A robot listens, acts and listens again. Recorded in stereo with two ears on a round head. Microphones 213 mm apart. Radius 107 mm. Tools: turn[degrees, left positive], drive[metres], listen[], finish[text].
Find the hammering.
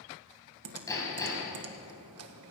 Thought: The hammering: about 15° left or 165° left.
Action: turn[15]
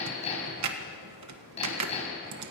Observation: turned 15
Thought: So it is at 150° left.
Action: turn[150]
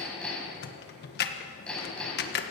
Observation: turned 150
Action: finish[Facing the hammering.]